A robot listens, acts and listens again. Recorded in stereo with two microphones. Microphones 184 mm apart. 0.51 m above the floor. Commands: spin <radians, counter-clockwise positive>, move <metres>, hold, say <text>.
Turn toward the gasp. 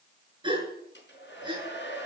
spin -0.44
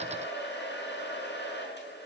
hold
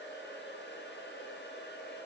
say I heard a gasp, but can't make it out now. It was about straight ahead or 130° right.